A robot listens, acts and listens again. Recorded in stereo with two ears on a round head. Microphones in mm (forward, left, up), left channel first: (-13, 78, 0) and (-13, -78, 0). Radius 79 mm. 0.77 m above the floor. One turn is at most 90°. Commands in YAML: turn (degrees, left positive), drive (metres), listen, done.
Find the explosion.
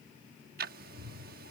listen: true
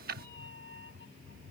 listen: true
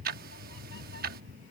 done: "I can't make out an explosion to turn to."